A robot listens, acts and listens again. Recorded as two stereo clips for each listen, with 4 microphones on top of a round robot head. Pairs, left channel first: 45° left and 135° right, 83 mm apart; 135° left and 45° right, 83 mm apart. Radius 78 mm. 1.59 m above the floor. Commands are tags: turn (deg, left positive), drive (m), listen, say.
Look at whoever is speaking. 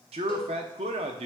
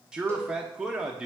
<turn deg="-125"/>
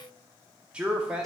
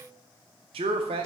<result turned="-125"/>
<turn deg="-55"/>
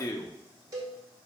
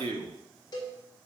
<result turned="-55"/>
<turn deg="-15"/>
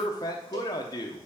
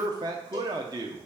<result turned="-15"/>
<say>Facing the man speaking, under 1 m away.</say>